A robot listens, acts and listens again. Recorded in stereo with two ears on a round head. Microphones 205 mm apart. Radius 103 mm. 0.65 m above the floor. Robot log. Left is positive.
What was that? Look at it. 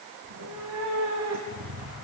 cmd yaw -90
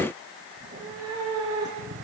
note: So it is at 20° right.
cmd yaw -20
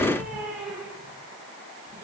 end: Facing the cat meowing.